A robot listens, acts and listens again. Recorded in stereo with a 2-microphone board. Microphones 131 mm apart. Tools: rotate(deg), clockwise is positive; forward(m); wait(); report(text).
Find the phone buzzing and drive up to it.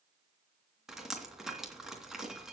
wait()
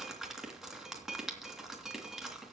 wait()
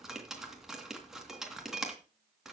report("I can't make out a phone buzzing, only dripping.")